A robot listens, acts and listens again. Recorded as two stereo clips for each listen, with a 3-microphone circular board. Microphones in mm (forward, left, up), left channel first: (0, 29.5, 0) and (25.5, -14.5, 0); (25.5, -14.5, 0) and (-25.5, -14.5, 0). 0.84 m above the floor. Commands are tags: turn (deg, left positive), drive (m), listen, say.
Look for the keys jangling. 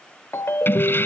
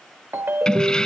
<turn deg="75"/>
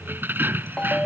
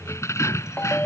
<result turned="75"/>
<turn deg="-10"/>
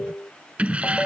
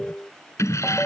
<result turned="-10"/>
<say>Found it: keys jangling, straight ahead.</say>